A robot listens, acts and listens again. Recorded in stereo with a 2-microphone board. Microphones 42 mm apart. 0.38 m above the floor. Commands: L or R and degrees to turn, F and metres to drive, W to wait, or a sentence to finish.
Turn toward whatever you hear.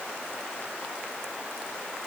W
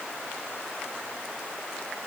W
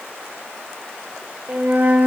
R45
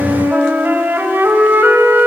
R75
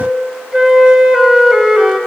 R15
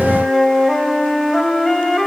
Facing the flute, 1 to 2 m away.